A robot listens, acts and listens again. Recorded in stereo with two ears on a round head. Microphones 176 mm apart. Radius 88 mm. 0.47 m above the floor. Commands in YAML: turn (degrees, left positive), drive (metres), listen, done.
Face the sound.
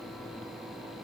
listen: true
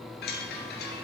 turn: 55
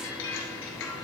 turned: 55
turn: 70
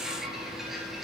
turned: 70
done: "Facing the chime."